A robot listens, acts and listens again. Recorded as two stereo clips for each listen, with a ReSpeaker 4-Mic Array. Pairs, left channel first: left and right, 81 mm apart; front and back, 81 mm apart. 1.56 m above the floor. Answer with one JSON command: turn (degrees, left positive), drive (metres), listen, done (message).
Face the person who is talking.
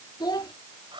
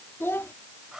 {"turn": 60}
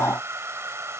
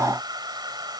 {"listen": true}
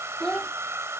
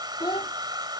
{"turn": 10}
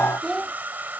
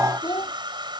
{"done": "Found it: a child speaking, straight ahead."}